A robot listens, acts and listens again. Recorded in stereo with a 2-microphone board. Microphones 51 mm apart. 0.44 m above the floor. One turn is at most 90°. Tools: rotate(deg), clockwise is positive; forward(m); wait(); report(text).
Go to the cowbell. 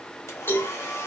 rotate(-45)
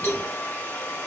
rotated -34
rotate(-90)
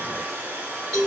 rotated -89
forward(1.0)
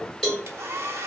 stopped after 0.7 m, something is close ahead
rotate(-10)
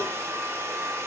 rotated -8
wait()
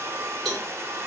report("Arrived at the cowbell, straight ahead.")